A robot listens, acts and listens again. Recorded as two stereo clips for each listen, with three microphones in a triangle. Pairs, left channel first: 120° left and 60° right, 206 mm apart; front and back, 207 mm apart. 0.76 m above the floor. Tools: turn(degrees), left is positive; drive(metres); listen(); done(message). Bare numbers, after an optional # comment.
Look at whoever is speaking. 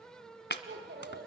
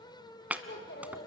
# The child speaking: 25° right.
turn(-25)
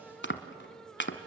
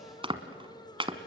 listen()
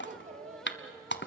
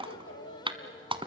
done("Facing the child speaking, 2 to 4 m away.")